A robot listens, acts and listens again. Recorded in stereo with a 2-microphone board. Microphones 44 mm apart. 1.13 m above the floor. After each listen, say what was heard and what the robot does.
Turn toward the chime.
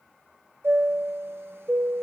The chime: about 60° right or 120° right. Turn 60° right.
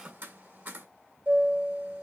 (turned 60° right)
So it is at 60° right. Turn 60° right.
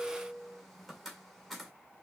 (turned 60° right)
Found it: a chime, straight ahead.